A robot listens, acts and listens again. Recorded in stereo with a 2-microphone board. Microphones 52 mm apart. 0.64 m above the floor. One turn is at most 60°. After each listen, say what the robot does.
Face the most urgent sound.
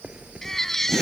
Turn 30° left.
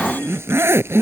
Keep listening.
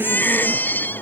Turn 60° left.
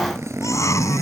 Turn 60° left.
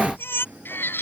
Turn 45° left.
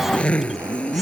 Keep listening.
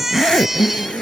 Facing the baby crying.